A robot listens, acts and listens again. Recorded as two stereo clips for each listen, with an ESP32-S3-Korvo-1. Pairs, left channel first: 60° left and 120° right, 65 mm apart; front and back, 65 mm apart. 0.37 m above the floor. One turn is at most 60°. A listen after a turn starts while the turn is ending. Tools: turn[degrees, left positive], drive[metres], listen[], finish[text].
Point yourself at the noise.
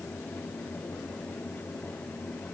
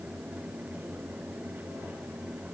Action: listen[]
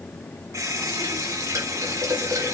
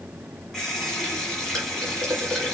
Thought: The running tap: 85° right.
Action: turn[-60]
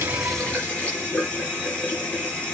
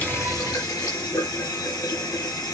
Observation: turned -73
Thought: The running tap is now 10° right.
Action: turn[-10]
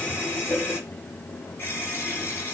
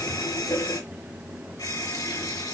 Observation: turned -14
Action: finish[Found it: a running tap, straight ahead, 2 to 4 m away.]